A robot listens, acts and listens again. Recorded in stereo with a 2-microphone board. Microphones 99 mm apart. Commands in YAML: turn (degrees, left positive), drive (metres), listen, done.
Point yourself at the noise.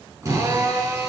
turn: -30
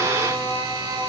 turn: -120
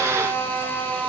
turn: 15
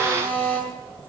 turn: 10
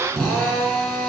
done: "Found it: a drill, straight ahead."